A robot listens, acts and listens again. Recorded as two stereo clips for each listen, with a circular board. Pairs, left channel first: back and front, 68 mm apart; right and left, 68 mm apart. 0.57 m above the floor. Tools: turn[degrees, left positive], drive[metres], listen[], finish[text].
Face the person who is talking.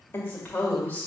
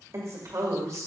Thought: The woman speaking: 120° left.
Action: turn[120]
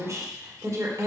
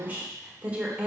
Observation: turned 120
Thought: The woman speaking is now 20° left.
Action: turn[20]
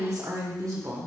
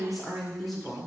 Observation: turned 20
Thought: The woman speaking is now 10° right.
Action: turn[-10]
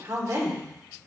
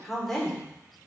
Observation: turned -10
Thought: The woman speaking is now 10° right.
Action: turn[-10]
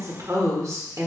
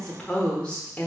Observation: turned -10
Thought: The woman speaking is now 25° right.
Action: turn[-25]
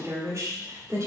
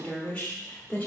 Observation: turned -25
Thought: The woman speaking is now 30° right.
Action: turn[-30]
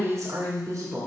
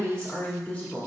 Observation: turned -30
Thought: The woman speaking is now 20° right.
Action: turn[-20]
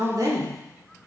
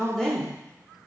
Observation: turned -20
Action: finish[Found it: a woman speaking, straight ahead.]